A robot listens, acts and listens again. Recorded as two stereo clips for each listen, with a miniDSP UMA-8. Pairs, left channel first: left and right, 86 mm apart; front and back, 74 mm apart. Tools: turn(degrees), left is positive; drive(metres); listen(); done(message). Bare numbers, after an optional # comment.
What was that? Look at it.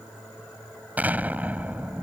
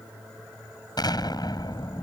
# The explosion: 20° right.
turn(-20)
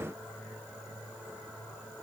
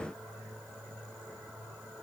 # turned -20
done("I heard an explosion from this way, but can't make it out now.")